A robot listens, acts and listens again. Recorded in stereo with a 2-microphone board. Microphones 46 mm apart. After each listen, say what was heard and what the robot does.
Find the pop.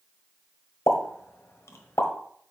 Turn 90° left.
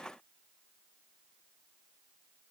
Facing where the pop came from. I can't hear it now.